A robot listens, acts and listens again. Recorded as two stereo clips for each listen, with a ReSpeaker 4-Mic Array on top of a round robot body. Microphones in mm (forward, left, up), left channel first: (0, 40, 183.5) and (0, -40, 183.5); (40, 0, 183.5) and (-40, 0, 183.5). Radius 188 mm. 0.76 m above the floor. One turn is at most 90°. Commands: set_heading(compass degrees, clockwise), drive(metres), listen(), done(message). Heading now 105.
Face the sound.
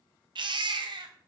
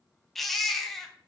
set_heading(195)
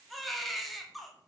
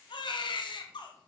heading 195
done("Facing the baby crying.")